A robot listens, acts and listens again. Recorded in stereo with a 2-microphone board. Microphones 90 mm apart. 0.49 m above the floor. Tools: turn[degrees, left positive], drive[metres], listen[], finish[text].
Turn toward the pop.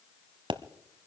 Thought: The pop: about 75° right or 105° right.
Action: turn[-75]
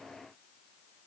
Action: listen[]
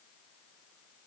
Action: finish[I heard a pop, but can't make it out now. It was about straight ahead or 30° right.]